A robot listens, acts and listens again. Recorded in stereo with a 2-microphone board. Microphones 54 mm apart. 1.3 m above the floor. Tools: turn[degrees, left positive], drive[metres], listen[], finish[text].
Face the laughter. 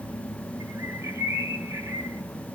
Action: listen[]
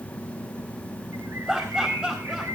Thought: The laughter: about 15° right or 165° right.
Action: turn[-15]
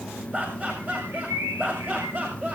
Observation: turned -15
Thought: The laughter: about 35° right or 145° right.
Action: turn[-35]
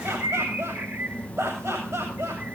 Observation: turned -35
Thought: So it is at 110° right.
Action: turn[-110]
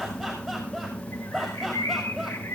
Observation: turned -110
Action: finish[Facing the laughter, over 4 m away.]